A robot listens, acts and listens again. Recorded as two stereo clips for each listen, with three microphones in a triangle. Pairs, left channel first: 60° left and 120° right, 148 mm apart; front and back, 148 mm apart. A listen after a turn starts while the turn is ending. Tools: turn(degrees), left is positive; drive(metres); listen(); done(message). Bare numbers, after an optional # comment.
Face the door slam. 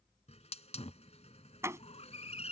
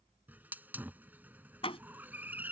# The door slam: 50° right.
turn(-50)
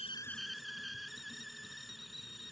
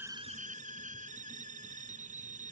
done("I heard a door slam from this way, but can't make it out now.")